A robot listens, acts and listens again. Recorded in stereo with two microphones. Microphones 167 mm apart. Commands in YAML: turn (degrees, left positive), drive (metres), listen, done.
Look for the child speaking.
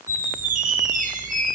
listen: true
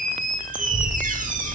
turn: -90
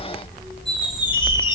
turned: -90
turn: 15
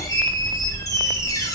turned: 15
turn: 10
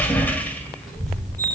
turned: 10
done: "Facing the child speaking."